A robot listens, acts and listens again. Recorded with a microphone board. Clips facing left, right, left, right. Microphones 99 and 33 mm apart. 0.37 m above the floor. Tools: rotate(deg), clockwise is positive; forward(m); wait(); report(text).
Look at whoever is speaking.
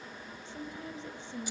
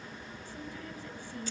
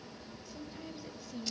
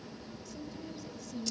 rotate(-25)
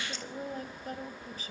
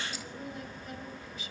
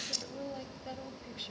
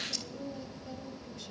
rotate(-125)
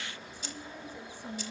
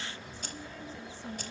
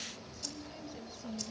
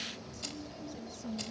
rotate(-15)
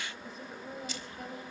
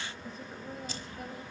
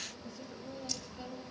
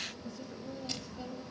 report("Found it: a woman speaking, straight ahead, 1 to 2 m away.")